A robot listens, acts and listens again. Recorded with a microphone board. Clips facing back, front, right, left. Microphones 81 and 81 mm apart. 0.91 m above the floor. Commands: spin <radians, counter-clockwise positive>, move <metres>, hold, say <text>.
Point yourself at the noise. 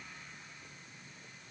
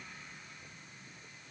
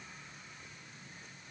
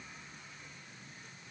hold
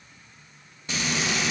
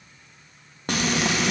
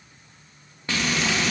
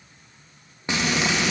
spin 0.35
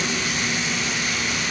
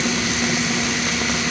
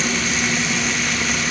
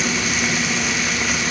say Facing the frying.